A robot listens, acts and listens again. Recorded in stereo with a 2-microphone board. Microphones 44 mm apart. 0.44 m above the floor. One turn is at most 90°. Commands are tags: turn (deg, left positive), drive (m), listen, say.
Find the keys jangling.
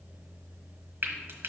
<listen/>
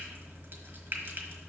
<listen/>
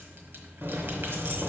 <turn deg="-50"/>
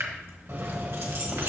<turn deg="-70"/>
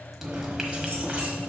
<turn deg="-30"/>
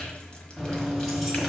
<say>Found it: keys jangling, straight ahead.</say>